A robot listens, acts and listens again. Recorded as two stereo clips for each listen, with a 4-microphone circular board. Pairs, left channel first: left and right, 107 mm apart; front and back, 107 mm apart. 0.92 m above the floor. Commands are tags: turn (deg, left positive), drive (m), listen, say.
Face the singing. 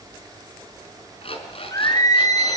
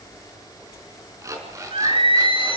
<turn deg="145"/>
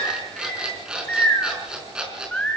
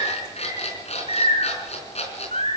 <turn deg="10"/>
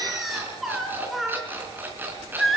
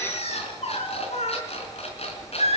<say>Found it: singing, straight ahead, over 4 m away.</say>